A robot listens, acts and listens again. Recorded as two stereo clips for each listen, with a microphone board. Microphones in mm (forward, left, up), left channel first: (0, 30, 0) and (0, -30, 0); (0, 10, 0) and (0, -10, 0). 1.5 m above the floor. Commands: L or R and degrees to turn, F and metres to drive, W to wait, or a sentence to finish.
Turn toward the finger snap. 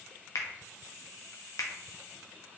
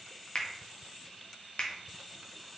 L60
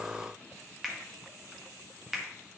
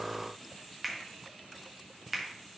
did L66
Facing the finger snap.